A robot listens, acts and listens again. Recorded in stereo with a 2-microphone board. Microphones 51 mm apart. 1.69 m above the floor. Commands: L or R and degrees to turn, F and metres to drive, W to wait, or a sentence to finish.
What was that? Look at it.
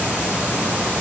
W
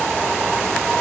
W
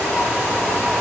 I can't make out anything to turn to.